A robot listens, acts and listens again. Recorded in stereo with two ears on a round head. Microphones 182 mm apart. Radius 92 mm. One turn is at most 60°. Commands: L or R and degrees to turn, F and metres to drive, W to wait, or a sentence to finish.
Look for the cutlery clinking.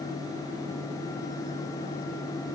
W
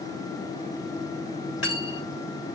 L60
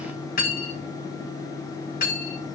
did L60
L45
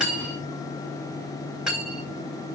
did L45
Found it: cutlery clinking, straight ahead, over 4 m away.